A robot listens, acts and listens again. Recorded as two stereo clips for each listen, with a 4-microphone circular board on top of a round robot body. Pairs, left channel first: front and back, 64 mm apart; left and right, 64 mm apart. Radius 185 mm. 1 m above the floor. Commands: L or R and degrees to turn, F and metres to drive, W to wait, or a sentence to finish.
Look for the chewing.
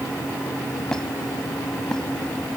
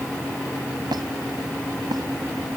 W
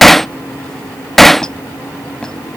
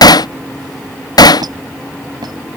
W
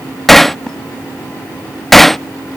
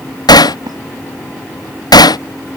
I can't make out chewing, only hammering and a squeak.